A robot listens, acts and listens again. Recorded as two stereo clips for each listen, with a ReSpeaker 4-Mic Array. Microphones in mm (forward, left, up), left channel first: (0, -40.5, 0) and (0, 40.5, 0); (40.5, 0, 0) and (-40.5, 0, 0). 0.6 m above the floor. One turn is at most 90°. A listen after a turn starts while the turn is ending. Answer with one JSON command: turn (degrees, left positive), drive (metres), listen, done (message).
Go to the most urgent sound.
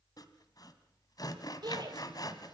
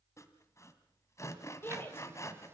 {"turn": 60}
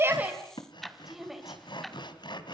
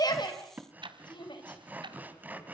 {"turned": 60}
{"drive": 1.0}
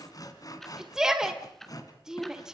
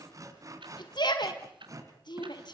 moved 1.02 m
{"drive": 1.0}
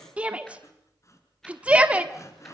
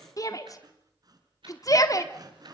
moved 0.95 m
{"turn": 20}
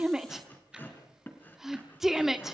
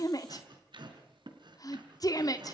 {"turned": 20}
{"drive": 1.0}
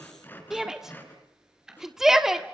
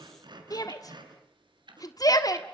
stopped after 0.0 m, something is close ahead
{"done": "I am next to the shout."}